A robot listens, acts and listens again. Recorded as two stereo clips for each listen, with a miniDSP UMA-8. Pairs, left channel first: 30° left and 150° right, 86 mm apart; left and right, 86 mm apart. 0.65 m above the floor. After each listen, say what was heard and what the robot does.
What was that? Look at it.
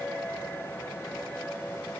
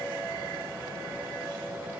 Keep listening.
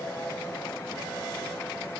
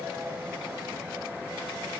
Keep listening.
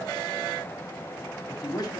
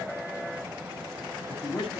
The man speaking: 80° left. Turn 80° left.
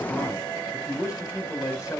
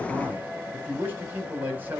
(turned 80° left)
The man speaking is now 20° right. Turn 20° right.
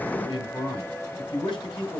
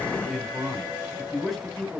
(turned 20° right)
Found it: a man speaking, straight ahead, 2 to 4 m away.